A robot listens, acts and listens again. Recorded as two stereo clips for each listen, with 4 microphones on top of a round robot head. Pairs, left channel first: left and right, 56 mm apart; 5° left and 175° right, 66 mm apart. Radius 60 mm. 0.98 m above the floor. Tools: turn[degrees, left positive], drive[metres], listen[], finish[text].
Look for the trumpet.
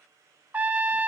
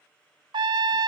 Thought: The trumpet: 160° right.
Action: turn[-160]
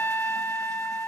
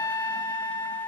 Thought: The trumpet is now 35° left.
Action: turn[35]
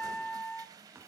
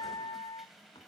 Thought: The trumpet is now 15° left.
Action: turn[15]
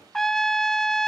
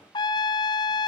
Action: finish[Facing the trumpet.]